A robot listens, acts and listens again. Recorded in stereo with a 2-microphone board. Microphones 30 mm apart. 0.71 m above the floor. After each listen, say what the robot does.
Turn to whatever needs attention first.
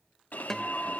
Turn 60° left.
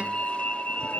Turn 50° left.
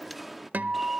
Facing the alarm, under 1 m away.